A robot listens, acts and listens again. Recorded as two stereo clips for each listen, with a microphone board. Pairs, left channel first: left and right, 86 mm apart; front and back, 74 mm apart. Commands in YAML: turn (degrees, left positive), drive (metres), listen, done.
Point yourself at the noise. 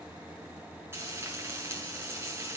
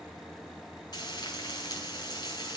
turn: -25
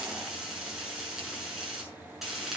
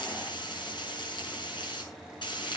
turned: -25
done: "Found it: frying, straight ahead, over 4 m away."